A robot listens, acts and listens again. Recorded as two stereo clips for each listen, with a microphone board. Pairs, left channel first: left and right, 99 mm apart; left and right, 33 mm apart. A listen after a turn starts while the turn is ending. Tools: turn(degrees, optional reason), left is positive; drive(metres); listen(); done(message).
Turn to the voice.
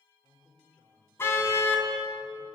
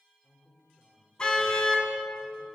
turn(degrees=-30)
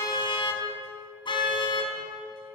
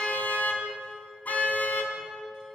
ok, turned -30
listen()
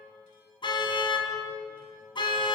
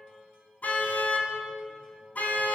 listen()
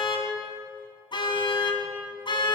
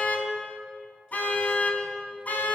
done("I heard a man speaking, but can't make it out now. It was about 20° left or 140° right.")